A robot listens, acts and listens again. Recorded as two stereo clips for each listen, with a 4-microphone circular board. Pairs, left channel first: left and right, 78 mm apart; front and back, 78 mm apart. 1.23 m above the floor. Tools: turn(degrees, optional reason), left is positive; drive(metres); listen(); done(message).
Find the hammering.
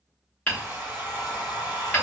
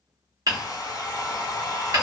turn(degrees=160, reason="The hammering: 160° left.")
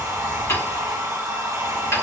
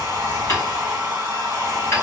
turn(degrees=45, reason="The hammering is now 45° left.")
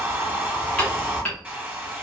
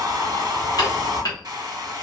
turn(degrees=20, reason="The hammering is now 20° left.")
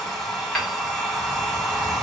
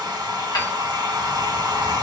listen()
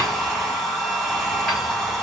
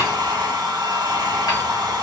listen()
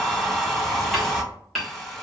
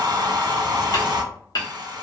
done("Found it: hammering, straight ahead.")